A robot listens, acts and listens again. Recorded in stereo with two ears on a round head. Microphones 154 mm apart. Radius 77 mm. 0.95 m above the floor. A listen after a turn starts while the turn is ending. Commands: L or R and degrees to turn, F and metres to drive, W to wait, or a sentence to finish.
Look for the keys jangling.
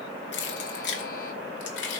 L90
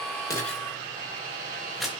Facing the keys jangling, 2 to 4 m away.